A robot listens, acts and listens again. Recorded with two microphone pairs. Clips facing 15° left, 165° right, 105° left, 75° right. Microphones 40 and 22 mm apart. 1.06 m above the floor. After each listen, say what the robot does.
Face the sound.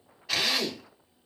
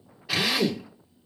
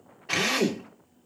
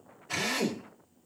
Turn 110° left.
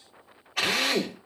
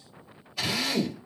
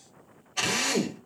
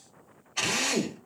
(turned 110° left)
Found it: a drill, straight ahead, 2 to 4 m away.